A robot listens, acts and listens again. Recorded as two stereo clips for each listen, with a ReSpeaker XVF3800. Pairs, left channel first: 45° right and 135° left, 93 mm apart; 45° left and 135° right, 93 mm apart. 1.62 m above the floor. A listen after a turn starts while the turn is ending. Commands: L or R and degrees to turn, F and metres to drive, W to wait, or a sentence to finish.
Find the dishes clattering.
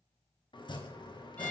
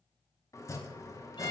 W
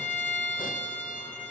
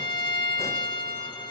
W
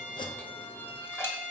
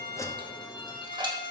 R105
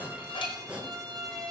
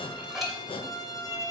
W
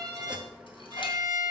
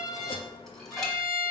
W
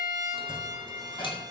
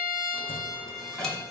R40
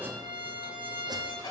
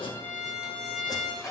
Facing the dishes clattering, 1 to 2 m away.